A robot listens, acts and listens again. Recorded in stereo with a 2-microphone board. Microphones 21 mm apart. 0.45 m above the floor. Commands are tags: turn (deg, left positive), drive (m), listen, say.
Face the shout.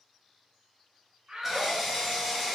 <turn deg="-45"/>
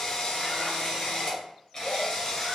<listen/>
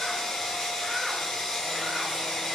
<listen/>
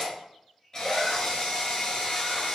<say>I heard a shout, but can't make it out now. It was about straight ahead or 90° right.</say>